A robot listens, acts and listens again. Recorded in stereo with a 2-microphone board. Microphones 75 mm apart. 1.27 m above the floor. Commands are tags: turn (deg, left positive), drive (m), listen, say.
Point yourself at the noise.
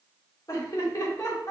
<turn deg="45"/>
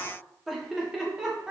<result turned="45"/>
<turn deg="-10"/>
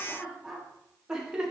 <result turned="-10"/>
<turn deg="-15"/>
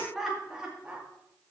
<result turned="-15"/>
<turn deg="-10"/>
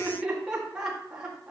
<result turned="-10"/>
<turn deg="-10"/>
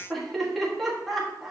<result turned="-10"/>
<say>Found it: laughter, straight ahead, 1 to 2 m away.</say>